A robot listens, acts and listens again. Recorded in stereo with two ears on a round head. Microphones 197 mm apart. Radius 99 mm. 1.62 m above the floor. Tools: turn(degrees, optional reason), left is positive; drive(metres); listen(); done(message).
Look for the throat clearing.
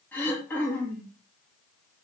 turn(degrees=30)
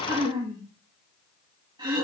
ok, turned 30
turn(degrees=-20, reason="So it is at 20° right.")
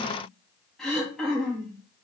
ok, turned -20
done("Facing the throat clearing.")